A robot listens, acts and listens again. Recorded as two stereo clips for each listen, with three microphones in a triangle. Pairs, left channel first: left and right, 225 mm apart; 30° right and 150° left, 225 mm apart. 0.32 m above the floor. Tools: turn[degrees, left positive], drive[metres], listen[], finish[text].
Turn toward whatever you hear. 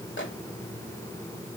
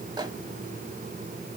Thought: The microwave: 85° left.
Action: turn[85]
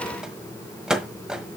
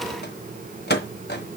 Action: finish[Facing the microwave, 1 to 2 m away.]